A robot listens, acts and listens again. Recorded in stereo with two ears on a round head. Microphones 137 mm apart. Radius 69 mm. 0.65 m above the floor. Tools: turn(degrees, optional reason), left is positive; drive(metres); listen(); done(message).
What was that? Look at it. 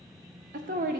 turn(degrees=-60, reason="The woman speaking: about 60° right or 120° right.")
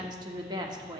turn(degrees=-35, reason="So it is at 35° right.")
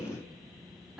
turn(degrees=-10, reason="The woman speaking is now 10° right.")
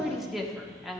done("Facing the woman speaking, under 1 m away.")